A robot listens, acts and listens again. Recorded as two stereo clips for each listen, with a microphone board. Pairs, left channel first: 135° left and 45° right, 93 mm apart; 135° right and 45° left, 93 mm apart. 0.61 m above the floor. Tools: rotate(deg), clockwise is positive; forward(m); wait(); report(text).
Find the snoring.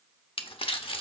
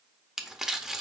wait()
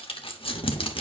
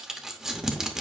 wait()
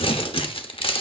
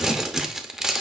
report("I can't make out snoring, only crumpling.")